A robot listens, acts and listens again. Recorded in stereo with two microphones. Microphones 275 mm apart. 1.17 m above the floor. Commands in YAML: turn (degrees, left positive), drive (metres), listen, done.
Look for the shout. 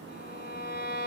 listen: true
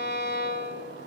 listen: true
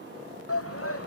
turn: 55
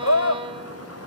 turn: 65
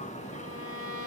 listen: true
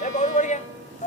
turn: 25
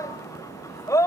turn: 10
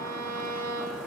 listen: true
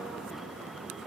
done: "Facing the shout."